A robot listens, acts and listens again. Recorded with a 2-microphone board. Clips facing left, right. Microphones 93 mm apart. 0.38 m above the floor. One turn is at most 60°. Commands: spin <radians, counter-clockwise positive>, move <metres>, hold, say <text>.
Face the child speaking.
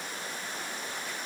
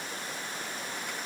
hold
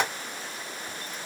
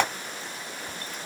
hold
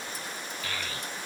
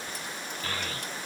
spin -0.61
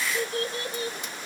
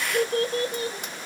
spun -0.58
spin -0.61
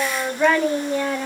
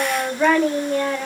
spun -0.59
spin 0.17
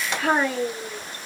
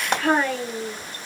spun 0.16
spin 0.17
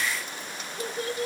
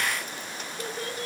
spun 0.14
say Facing the child speaking.